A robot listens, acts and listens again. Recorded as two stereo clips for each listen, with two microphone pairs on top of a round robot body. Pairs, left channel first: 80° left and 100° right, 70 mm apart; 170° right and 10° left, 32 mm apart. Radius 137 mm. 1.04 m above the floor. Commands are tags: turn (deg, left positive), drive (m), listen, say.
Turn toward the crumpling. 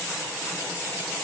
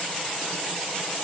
<listen/>
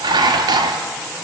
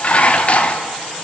<listen/>
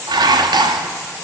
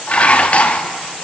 <say>I can't make out crumpling, only dishes clattering.</say>